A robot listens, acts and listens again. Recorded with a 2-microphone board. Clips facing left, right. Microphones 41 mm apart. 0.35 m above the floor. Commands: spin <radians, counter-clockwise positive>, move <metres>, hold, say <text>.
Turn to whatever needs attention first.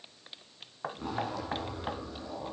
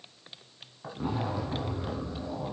hold
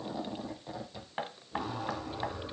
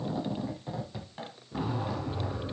hold
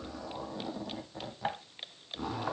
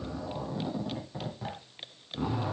say I can't make out anything urgent, only knocking and a zipper.